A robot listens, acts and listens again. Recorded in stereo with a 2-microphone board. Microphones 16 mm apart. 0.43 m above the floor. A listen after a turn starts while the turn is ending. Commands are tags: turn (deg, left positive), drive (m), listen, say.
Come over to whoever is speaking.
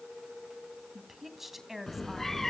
<turn deg="-20"/>
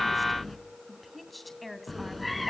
<drive m="1.0"/>
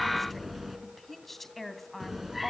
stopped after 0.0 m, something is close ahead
<turn deg="10"/>
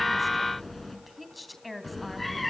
<say>Blocked. The woman speaking is further on, straight ahead.</say>